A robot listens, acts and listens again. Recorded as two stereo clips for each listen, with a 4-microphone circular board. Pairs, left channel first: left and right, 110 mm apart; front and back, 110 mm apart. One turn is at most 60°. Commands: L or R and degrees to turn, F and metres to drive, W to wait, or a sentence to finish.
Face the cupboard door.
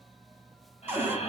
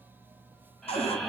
R15
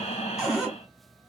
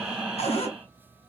Facing the cupboard door, 2 to 4 m away.